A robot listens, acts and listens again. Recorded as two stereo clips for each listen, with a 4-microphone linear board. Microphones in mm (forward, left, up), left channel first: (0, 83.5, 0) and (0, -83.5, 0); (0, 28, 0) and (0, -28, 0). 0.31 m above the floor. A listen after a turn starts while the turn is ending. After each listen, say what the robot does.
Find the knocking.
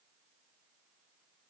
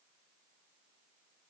Keep listening.
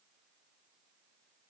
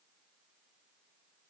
Keep listening.
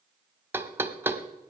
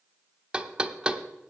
Turn 30° right.
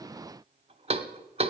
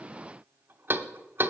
Turn 135° right.
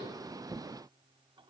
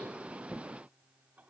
Keep listening.
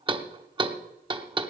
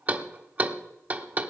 Turn 35° right.
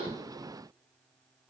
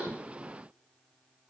Keep listening.
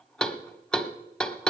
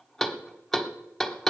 Found it: knocking, straight ahead.